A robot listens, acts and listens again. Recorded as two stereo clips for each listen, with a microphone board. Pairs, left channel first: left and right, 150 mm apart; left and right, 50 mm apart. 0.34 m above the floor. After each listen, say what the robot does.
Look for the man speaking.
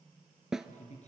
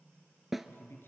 Turn 50° left.
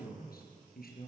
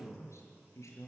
Turn 75° left.
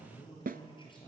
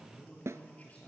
Turn 30° left.
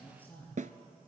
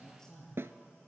Turn 10° left.
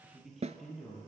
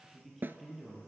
Found it: a man speaking, straight ahead.